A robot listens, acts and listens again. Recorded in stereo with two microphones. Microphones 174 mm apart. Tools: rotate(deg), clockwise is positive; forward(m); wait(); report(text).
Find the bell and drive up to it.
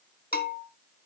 rotate(-60)
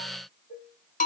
rotate(-55)
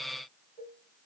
wait()
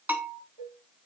rotate(10)
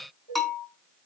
forward(1.0)
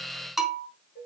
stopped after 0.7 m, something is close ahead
report("Blocked. The bell is further on, straight ahead.")